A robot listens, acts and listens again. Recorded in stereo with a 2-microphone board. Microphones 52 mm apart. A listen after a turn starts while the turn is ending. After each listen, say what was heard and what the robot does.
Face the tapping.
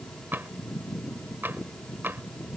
The tapping: about 45° right or 135° right. Turn 45° right.
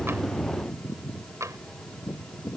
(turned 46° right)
So it is at 90° right. Turn 90° right.
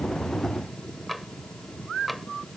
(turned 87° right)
Facing the tapping.